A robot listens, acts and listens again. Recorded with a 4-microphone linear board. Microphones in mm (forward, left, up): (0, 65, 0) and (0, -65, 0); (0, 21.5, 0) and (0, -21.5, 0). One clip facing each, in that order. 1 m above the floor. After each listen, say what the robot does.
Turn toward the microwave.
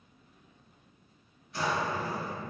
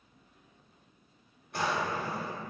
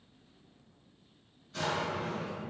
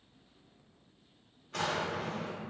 Keep listening.
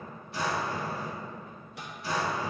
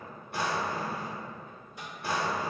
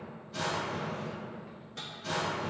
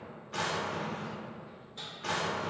Turn 75° left.
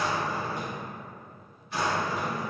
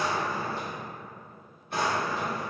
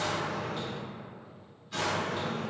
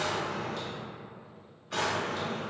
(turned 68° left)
Keep listening.
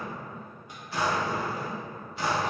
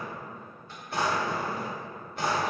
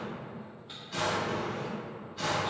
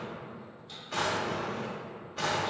Keep listening.
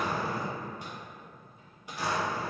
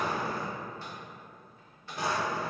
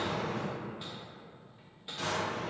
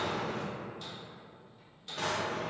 Turn 15° left.
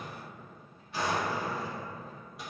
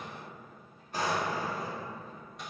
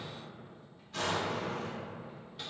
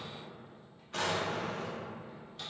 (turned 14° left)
Facing the microwave.